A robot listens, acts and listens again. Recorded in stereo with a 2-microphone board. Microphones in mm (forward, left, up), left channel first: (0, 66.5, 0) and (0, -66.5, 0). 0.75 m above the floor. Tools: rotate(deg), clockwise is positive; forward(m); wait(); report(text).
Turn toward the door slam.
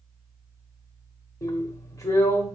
wait()
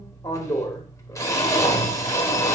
wait()
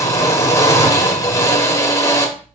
report("I can't make out a door slam to turn to.")